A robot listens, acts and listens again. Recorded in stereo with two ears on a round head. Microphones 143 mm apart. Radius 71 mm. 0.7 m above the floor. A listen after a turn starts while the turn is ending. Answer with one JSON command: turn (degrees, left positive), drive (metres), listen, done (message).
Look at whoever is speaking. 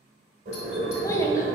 {"turn": 20}
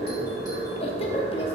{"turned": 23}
{"turn": 135}
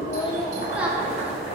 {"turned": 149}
{"turn": -10}
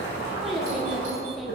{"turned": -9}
{"done": "Found it: a child speaking, straight ahead, under 1 m away."}